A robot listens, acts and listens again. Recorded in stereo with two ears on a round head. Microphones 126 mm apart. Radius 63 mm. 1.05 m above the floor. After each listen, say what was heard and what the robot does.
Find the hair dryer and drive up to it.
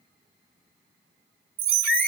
Keep listening.
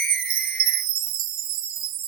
Keep listening.
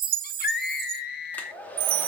Turn 30° left.
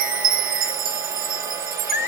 Keep listening.
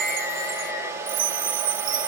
So it is at 20° right. Turn 20° right.
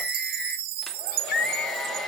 Keep listening.
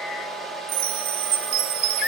Drive 1.0 m forward.
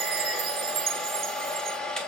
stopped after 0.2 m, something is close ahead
Blocked. The hair dryer is further on, straight ahead.